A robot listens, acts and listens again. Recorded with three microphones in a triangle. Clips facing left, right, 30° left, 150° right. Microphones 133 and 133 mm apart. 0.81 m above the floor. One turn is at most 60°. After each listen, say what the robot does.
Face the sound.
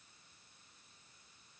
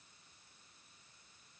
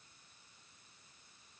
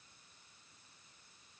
Keep listening.
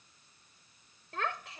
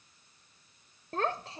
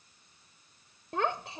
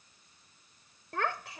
Turn 35° right.
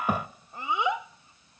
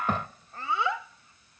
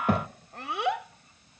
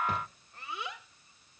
Turn 20° left.
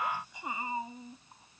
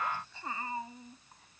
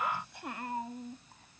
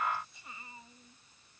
Turn 20° left.
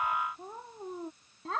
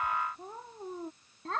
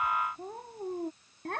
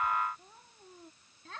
Found it: a child speaking, straight ahead.